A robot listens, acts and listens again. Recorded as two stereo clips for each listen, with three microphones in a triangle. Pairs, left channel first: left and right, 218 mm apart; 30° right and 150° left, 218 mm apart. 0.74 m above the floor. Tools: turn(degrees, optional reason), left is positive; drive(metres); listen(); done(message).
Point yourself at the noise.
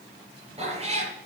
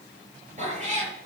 turn(degrees=-150, reason="The cat meowing: 150° right.")
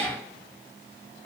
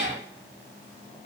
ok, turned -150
done("Facing the cat meowing, over 4 m away.")